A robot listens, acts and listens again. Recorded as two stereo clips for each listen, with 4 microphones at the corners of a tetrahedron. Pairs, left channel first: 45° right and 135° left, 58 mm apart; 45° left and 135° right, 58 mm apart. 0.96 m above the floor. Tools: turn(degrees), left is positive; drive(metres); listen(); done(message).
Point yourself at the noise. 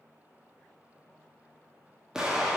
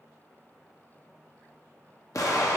turn(degrees=55)
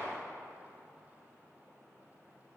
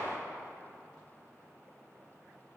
done("Facing the explosion, 1 to 2 m away.")